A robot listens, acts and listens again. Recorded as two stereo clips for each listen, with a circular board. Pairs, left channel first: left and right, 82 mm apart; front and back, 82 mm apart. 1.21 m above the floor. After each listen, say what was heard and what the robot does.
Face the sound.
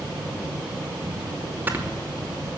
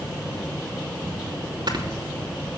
The snoring: 155° right. Turn 155° right.
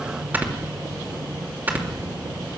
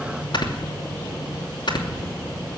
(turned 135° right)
The snoring is now 25° right. Turn 25° right.
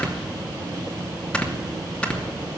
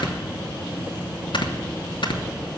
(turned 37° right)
The snoring is now 15° left. Turn 15° left.
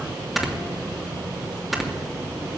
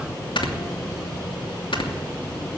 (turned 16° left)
Facing the snoring.